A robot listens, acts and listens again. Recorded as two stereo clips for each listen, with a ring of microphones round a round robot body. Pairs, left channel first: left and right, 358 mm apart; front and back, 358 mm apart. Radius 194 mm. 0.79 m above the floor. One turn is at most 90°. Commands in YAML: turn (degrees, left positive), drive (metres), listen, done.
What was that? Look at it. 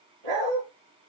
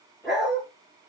turn: -90
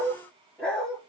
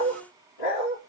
done: "Facing the dog barking."